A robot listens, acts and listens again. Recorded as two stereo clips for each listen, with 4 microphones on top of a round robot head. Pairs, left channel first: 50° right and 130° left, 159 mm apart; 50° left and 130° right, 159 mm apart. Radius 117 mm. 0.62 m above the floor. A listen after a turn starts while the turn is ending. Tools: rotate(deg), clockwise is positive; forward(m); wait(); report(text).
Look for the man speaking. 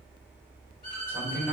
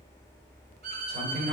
rotate(150)
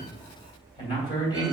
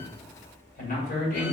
rotate(-15)
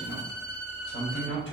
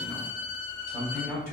report("Found it: a man speaking, straight ahead.")